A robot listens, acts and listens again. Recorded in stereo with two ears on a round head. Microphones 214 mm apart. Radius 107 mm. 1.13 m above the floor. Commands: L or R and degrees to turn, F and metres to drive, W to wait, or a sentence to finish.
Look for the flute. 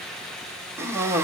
W
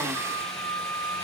L30
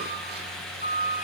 L145
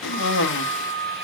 R45
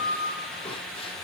R15
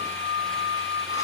R10
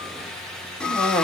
W
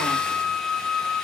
Found it: a flute, straight ahead, over 4 m away.